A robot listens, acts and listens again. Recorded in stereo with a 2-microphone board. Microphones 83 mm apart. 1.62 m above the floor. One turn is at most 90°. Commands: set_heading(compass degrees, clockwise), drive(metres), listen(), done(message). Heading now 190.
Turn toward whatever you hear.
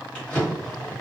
set_heading(160)
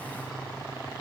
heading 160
listen()
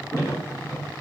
set_heading(70)
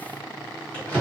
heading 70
set_heading(50)
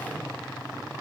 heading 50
listen()
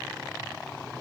listen()
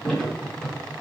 set_heading(40)
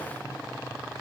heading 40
listen()
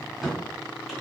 done("Found it: a drawer, straight ahead.")